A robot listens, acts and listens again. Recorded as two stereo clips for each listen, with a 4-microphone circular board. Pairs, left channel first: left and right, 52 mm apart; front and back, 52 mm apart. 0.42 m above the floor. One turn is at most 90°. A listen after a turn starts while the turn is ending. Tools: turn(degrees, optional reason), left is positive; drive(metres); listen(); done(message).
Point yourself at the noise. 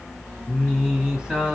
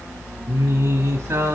turn(degrees=-90, reason="The singing: 160° right.")
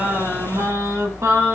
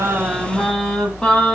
turn(degrees=-75, reason="The singing is now 75° right.")
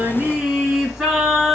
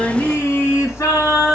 turn(degrees=-10, reason="The singing is now 10° right.")
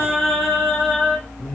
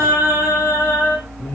done("Facing the singing, 2 to 4 m away.")